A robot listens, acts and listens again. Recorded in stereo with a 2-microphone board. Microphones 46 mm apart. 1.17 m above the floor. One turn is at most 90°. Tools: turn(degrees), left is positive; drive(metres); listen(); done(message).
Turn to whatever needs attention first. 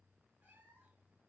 listen()
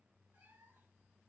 listen()
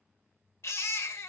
turn(degrees=65)
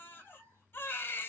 turn(degrees=50)
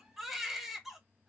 done("Facing the baby crying.")